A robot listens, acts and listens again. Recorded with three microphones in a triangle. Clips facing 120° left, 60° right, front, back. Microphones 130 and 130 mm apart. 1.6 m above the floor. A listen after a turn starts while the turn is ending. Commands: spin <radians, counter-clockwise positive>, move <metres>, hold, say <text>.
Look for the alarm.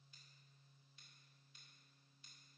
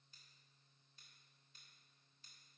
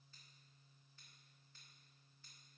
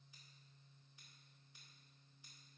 hold
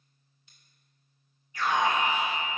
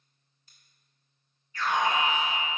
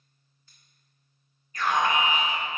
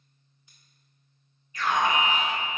spin 0.79
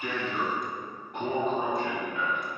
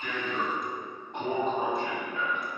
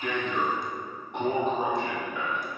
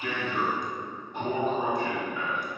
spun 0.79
say Facing the alarm, 2 to 4 m away.